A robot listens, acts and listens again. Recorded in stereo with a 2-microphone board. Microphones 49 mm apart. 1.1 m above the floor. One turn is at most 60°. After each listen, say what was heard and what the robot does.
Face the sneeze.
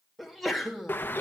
Turn 30° left.
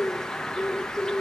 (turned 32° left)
Keep listening.
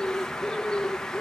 I heard a sneeze, but can't make it out now. It was about 30° right or 150° left.